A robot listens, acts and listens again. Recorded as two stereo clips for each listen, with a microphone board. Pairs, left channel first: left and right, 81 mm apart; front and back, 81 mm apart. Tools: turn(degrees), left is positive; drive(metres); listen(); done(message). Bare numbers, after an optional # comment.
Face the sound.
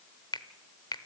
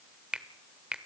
# The finger snap: 105° left.
turn(105)
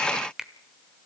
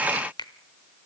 done("Found it: a finger snap, straight ahead.")